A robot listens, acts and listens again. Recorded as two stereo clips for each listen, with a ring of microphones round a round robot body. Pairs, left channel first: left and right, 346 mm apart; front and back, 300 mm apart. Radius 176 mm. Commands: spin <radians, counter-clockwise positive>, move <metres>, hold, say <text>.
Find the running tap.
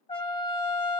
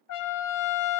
hold
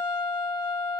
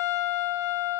hold
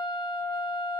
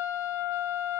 say I can't make out a running tap, only a trumpet.